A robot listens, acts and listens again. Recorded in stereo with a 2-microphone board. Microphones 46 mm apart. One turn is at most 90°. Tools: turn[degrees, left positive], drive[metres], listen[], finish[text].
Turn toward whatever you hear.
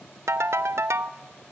Action: turn[-90]
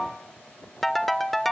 Action: finish[Found it: a ringtone, straight ahead, under 1 m away.]